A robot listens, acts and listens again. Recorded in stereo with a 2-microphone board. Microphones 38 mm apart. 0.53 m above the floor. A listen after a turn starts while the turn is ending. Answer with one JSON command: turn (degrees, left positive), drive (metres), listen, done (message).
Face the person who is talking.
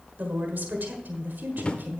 {"turn": -60}
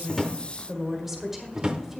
{"turn": -10}
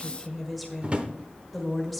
{"done": "Found it: a woman speaking, straight ahead, 1 to 2 m away."}